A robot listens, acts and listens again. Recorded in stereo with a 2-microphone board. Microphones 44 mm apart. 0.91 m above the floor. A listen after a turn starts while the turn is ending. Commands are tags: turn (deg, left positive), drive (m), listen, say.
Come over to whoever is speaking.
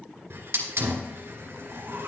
<listen/>
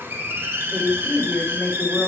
<turn deg="35"/>
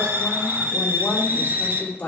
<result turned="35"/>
<turn deg="110"/>
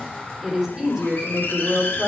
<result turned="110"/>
<turn deg="-15"/>
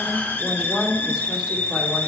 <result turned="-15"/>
<drive m="1.0"/>
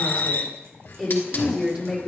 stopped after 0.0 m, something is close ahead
<turn deg="-10"/>
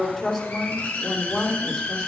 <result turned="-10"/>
<say>Something is in my way. I am facing the woman speaking but have not reached it.</say>